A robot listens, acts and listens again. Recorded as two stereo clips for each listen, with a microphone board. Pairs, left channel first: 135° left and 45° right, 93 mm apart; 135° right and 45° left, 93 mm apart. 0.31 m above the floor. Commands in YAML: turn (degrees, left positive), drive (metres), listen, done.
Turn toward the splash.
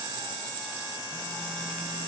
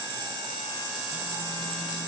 listen: true
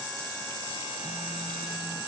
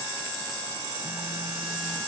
listen: true
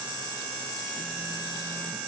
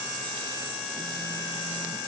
done: "I can't make out a splash."